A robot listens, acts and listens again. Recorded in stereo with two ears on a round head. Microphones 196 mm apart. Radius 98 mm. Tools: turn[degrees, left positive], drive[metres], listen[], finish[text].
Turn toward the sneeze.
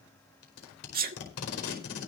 Thought: The sneeze: about 40° right or 140° right.
Action: turn[-40]
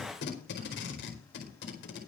Action: listen[]
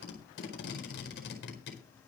Action: finish[I heard a sneeze, but can't make it out now. It was about straight ahead or 100° right.]